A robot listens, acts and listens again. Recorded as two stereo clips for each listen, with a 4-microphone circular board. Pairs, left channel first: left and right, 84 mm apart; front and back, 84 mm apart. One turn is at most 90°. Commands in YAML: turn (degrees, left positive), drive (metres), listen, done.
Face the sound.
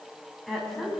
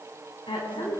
done: "Found it: a woman speaking, straight ahead, over 4 m away."